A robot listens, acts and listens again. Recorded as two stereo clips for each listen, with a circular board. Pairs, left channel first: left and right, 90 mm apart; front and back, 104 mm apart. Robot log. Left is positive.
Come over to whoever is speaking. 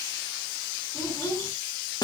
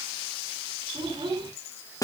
note: The child speaking: 140° left.
cmd yaw +140
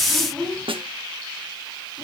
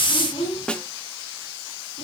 cmd fwd 1.0
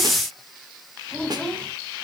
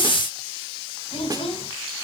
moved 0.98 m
note: The child speaking is now 10° left.
cmd yaw +10
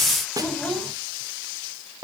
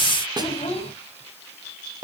cmd fwd 1.0
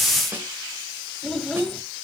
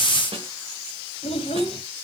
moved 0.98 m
cmd fwd 1.0
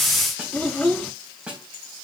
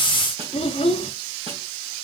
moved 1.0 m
cmd fwd 1.0
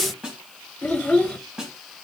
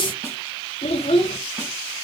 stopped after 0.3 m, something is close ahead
end: I am next to the child speaking.